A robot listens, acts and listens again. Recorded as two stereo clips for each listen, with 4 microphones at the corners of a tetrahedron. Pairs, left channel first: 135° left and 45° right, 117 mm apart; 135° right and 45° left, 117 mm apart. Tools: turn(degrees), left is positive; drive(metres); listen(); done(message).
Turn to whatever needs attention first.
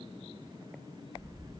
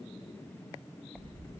listen()
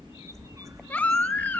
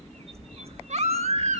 turn(degrees=60)
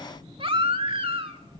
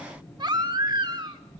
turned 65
done("Found it: a baby crying, straight ahead.")